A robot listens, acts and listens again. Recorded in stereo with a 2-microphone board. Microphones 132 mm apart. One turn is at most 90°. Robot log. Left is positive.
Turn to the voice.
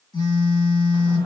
cmd idle
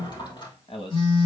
note: The man speaking: about 45° left or 135° left.
cmd yaw +45
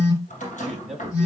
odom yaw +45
end: Facing the man speaking, 2 to 4 m away.